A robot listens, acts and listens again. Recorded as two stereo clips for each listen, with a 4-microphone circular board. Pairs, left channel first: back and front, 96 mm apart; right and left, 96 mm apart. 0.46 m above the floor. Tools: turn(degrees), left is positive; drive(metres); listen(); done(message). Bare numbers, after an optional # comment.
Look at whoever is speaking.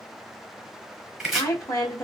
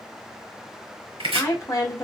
# The woman speaking: 140° right.
turn(-140)
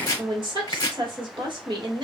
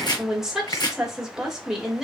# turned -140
done("Found it: a woman speaking, straight ahead.")